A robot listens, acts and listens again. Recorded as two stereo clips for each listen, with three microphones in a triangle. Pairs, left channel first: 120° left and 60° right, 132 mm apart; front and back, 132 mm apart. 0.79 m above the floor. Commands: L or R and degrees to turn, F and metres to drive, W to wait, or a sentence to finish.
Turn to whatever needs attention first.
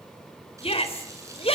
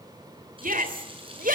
L170
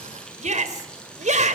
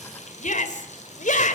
R25
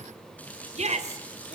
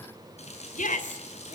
R25
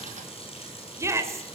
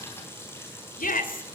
L10
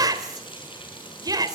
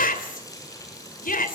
Found it: a shout, straight ahead, 2 to 4 m away.